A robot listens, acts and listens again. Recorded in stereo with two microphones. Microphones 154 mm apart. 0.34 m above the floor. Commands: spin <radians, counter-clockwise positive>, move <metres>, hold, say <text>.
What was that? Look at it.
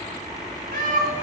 spin -1.13
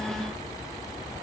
hold
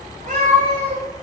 spin -0.96
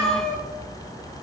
say Facing the cat meowing.